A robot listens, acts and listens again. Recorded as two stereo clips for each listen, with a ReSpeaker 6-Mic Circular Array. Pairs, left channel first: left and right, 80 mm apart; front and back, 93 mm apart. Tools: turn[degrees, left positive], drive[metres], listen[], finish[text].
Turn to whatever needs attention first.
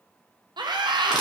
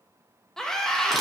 Thought: The scream: 85° right.
Action: turn[-85]
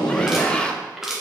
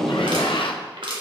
Thought: The scream is now 15° left.
Action: turn[15]
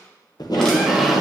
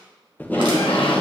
Action: listen[]
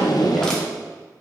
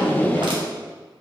Action: listen[]
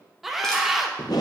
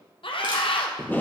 Action: finish[Facing the scream.]